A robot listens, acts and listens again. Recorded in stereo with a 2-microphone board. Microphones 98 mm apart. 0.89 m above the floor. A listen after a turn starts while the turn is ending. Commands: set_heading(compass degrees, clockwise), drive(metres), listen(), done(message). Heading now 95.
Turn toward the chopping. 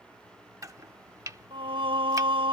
set_heading(130)
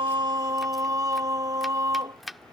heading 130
done("Facing the chopping.")